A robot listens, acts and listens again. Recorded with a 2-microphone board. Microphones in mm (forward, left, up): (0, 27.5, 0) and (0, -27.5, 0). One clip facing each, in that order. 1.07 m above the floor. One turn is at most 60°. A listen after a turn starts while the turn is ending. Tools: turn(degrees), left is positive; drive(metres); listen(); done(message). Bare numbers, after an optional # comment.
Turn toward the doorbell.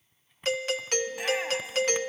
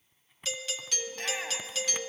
# The doorbell: about 45° left or 135° left.
turn(45)
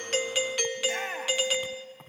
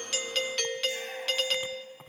# So it is at 10° left.
turn(10)
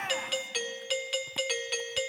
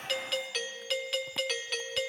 done("Found it: a doorbell, straight ahead.")